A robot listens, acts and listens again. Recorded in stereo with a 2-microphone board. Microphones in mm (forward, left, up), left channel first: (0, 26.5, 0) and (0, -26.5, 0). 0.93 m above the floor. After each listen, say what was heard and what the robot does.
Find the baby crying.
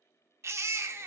The baby crying: about 55° right or 125° right. Turn 55° right.
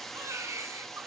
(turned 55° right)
So it is at 70° right. Turn 70° right.
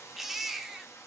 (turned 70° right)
Facing the baby crying.